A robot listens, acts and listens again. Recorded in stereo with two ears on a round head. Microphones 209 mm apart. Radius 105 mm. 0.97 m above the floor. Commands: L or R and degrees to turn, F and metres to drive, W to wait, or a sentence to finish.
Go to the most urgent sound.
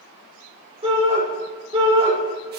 R25
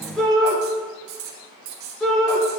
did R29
F1.0
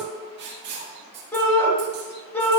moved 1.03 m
L10
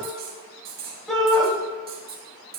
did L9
F1.0
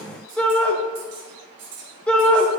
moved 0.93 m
F1.0
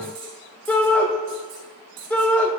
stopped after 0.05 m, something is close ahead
L10
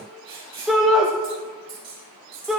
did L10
Arrived at the shout, straight ahead.